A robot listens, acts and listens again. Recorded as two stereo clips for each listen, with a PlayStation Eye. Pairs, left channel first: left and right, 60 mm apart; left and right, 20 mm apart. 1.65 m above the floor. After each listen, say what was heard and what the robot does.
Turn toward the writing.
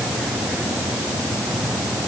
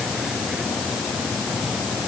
Keep listening.
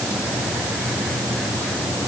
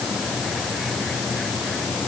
Keep listening.
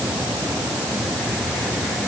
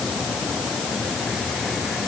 I can't make out writing to turn to.